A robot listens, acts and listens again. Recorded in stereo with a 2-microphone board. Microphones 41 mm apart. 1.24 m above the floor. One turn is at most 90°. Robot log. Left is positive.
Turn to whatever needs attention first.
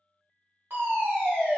note: The fire alarm: about 55° right or 125° right.
cmd yaw -55
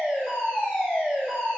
note: So it is at 25° right.
cmd yaw -25
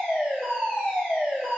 note: The fire alarm is now 15° right.
cmd yaw -15
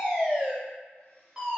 end: Found it: a fire alarm, straight ahead.